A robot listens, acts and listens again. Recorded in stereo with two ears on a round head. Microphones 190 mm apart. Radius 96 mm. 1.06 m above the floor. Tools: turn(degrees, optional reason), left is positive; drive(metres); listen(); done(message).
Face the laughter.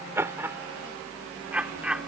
turn(degrees=-30)
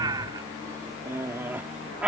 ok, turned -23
turn(degrees=-30)
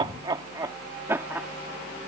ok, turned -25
turn(degrees=-30)
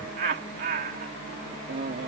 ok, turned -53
turn(degrees=-130, reason="So it is at 130° right.")
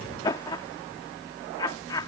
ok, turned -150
turn(degrees=20, reason="The laughter is now 20° left.")
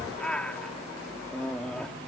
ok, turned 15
done("Found it: laughter, straight ahead.")